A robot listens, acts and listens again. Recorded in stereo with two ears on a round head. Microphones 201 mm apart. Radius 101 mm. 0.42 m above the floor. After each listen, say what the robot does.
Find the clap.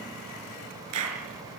Turn 90° right.
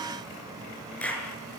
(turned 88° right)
Facing the clap, over 4 m away.